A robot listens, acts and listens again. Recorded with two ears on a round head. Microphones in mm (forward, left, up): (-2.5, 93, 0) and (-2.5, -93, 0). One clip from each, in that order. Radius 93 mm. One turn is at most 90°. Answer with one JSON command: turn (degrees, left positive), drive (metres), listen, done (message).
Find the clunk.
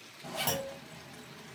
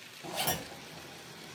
{"turn": 30}
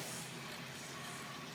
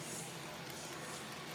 {"listen": true}
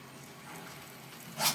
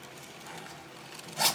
{"done": "I heard a clunk, but can't make it out now. It was about 20° right or 140° left."}